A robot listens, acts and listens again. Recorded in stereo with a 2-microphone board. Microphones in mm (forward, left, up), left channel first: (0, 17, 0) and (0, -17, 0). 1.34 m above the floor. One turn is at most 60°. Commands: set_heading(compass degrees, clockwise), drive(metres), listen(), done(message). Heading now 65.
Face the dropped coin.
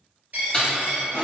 set_heading(120)
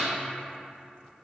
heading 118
listen()
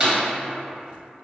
done("I heard a dropped coin, but can't make it out now. It was about 5° right or 70° right.")